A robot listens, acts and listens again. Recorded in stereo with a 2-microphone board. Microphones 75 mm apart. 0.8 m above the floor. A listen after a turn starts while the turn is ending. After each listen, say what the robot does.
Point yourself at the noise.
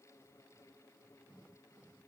Keep listening.
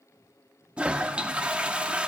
Turn 15° right.
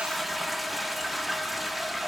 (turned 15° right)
Facing the toilet flushing, under 1 m away.